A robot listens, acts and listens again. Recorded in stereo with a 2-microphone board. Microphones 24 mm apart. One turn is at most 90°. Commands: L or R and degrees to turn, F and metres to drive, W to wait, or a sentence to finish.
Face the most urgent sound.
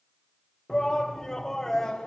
L25
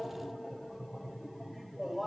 Facing the shout.